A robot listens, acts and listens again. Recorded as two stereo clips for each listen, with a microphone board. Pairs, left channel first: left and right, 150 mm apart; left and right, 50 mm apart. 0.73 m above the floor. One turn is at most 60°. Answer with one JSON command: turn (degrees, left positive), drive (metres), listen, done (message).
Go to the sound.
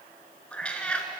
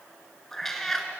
{"turn": 30}
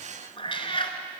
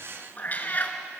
{"turn": 60}
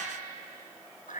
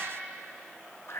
{"turn": 60}
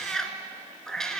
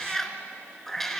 {"drive": 1.0}
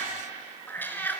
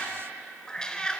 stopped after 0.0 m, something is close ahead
{"turn": 15}
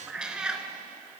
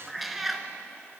{"done": "Something is in my way. I am facing the cat meowing but have not reached it."}